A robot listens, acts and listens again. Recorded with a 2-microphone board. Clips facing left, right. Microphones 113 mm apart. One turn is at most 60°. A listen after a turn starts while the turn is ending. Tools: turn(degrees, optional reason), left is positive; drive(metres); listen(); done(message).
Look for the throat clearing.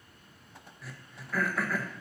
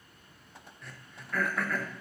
turn(degrees=30)
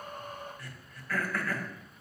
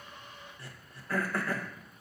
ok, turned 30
turn(degrees=-25, reason="So it is at 25° right.")
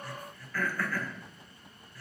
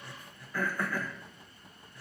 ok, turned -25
turn(degrees=-20, reason="The throat clearing is now 20° right.")
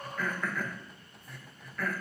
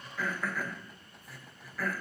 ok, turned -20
done("Facing the throat clearing.")